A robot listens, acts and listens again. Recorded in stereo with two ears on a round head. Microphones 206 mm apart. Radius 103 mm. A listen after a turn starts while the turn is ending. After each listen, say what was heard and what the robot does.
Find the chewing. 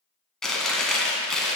Turn 30° left.
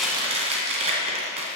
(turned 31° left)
So it is at 30° right. Turn 30° right.
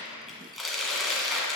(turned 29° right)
Found it: chewing, straight ahead, 1 to 2 m away.